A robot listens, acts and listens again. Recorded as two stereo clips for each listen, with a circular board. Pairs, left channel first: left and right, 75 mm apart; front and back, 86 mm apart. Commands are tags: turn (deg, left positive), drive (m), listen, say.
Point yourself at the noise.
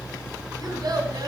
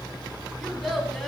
<turn deg="-90"/>
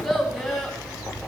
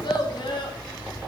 <say>Facing the child speaking.</say>